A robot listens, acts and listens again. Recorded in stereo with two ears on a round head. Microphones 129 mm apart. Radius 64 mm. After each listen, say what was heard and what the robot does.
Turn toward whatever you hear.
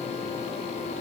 Keep listening.
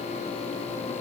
Keep listening.
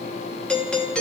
Turn 30° left.
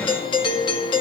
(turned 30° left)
So it is at 145° left. Turn 145° left.
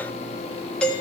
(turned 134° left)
The doorbell is now 10° left. Turn 10° left.
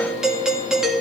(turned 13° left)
Facing the doorbell, 1 to 2 m away.